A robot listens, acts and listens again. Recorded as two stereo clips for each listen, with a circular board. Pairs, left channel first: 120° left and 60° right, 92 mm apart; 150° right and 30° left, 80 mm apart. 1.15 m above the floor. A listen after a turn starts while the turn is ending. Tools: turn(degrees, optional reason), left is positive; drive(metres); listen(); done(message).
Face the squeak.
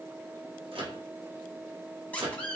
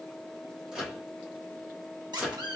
turn(degrees=45, reason="The squeak: 45° left.")
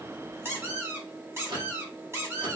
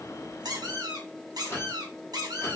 done("Facing the squeak, under 1 m away.")